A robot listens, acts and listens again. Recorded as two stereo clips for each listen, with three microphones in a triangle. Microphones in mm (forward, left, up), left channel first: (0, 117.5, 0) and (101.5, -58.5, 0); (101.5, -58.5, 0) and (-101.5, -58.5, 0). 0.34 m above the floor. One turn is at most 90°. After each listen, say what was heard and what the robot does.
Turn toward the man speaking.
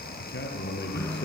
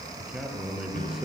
The man speaking: 95° left. Turn 90° left.
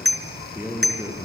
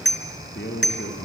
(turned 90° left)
The man speaking is now 15° left. Turn 15° left.
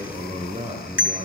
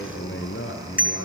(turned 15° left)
Found it: a man speaking, straight ahead.